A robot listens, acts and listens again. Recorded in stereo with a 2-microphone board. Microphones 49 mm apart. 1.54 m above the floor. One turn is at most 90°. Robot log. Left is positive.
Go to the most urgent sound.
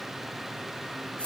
cmd idle
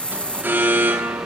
note: The alarm: about 45° right or 135° right.
cmd yaw -45
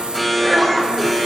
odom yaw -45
cmd fwd 1.0
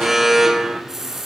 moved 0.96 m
cmd fwd 1.0
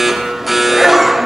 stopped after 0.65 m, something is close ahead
end: I am next to the alarm.